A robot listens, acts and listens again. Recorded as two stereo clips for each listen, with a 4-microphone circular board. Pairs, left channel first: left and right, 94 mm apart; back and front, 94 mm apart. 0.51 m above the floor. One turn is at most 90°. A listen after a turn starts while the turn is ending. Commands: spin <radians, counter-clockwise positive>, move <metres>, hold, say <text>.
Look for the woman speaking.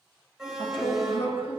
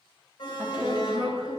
spin 1.40
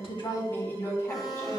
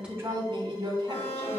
spin 0.44
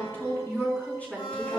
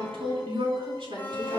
spin 0.26
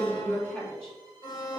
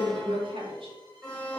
spin 0.17
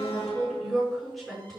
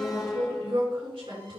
say Found it: a woman speaking, straight ahead.